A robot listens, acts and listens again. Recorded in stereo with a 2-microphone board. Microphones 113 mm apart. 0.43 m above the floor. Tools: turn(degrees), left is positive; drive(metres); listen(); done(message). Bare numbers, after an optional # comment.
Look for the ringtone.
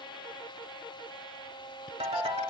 # The ringtone: about 65° right or 115° right.
turn(-65)
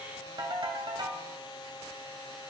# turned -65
# So it is at 45° right.
turn(-45)
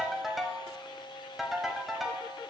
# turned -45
done("Facing the ringtone.")